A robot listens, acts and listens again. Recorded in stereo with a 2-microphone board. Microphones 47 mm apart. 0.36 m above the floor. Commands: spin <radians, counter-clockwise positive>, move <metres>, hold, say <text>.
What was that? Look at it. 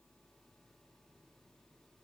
hold
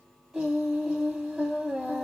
spin -0.52
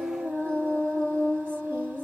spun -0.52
spin -2.44
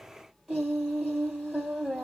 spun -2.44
say Facing the singing, 2 to 4 m away.